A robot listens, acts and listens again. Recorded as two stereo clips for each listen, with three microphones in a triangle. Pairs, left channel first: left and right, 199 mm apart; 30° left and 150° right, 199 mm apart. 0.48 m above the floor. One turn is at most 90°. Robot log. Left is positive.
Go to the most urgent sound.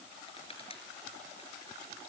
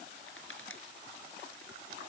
cmd idle
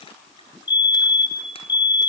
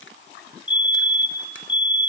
note: The fire alarm: 95° left.
cmd yaw +90
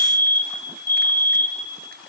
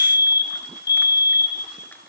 note: The fire alarm is now 15° left.
cmd yaw +15
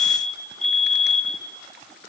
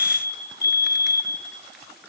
cmd fwd 1.0
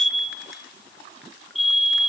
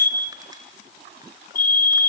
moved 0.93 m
cmd fwd 1.0
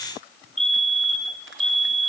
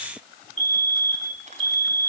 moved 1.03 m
cmd fwd 1.0
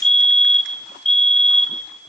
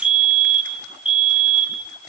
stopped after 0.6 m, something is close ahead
end: I am next to the fire alarm.